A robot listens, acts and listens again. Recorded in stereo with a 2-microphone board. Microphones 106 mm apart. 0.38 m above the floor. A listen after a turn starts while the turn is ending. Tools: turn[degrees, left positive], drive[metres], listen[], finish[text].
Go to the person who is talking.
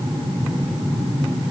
Action: listen[]
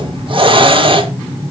Action: listen[]
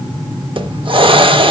Action: finish[I can't make out anyone speaking, only a hiss.]